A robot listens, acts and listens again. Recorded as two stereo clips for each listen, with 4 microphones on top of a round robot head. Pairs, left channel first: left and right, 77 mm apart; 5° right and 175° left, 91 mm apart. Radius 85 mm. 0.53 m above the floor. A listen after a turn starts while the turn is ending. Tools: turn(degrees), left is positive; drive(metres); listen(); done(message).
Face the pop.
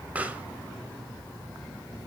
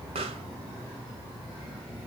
turn(degrees=-165)
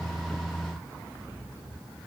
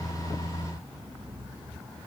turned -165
done("I heard a pop from this way, but can't make it out now.")